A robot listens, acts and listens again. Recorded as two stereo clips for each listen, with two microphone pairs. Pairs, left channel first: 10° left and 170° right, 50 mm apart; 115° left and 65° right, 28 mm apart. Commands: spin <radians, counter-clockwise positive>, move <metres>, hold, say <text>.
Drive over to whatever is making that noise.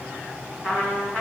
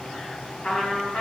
spin 1.57
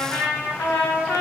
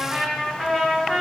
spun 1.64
move 1.0
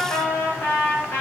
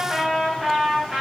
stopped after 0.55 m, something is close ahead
say Blocked. The trumpet is further on, straight ahead.